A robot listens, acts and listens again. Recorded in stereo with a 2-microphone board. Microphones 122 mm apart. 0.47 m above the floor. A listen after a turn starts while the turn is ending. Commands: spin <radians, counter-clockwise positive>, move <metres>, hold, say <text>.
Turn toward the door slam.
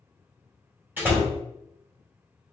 spin -0.26
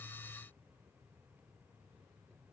hold
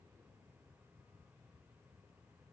say I heard a door slam, but can't make it out now. It was about straight ahead or 150° right.